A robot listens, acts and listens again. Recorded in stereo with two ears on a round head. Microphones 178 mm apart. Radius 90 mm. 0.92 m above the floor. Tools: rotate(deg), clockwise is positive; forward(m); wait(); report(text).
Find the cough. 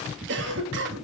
rotate(60)
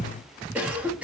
rotate(10)
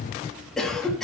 report("Facing the cough.")